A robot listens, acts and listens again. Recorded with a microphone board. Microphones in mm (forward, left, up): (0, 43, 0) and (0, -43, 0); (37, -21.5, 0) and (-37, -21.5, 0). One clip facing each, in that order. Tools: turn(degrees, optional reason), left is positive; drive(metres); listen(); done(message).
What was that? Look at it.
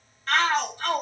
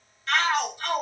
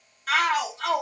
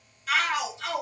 turn(degrees=40, reason="The shout: 40° left.")
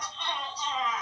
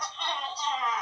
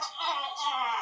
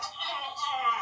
done("Facing the shout, 1 to 2 m away.")